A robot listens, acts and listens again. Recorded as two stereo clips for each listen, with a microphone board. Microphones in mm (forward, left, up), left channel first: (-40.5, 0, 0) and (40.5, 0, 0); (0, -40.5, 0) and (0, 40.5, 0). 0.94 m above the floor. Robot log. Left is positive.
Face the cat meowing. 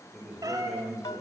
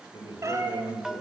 note: The cat meowing: 35° left.
cmd yaw +35
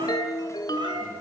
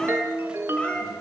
note: The cat meowing is now 15° right.
cmd yaw -15
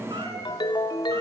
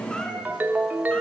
cmd idle
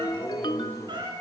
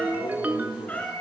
note: The cat meowing is now 20° right.
cmd yaw -20
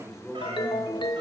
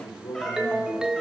cmd idle
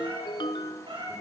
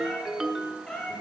note: The cat meowing is now 10° right.
cmd yaw -10
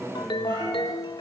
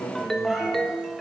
cmd idle
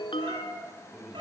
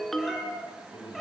end: Found it: a cat meowing, straight ahead.